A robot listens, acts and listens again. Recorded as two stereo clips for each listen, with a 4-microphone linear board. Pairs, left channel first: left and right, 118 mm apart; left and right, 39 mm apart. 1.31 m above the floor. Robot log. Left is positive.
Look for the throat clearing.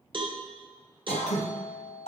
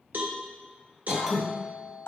note: The throat clearing: about 70° left or 110° left.
cmd yaw +70
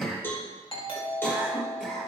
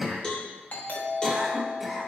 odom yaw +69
end: Found it: throat clearing, straight ahead.